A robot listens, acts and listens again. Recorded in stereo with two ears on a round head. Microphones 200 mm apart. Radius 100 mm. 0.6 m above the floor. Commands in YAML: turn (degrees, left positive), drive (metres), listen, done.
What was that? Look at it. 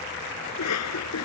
turn: 90
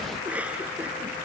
done: "Facing the cough."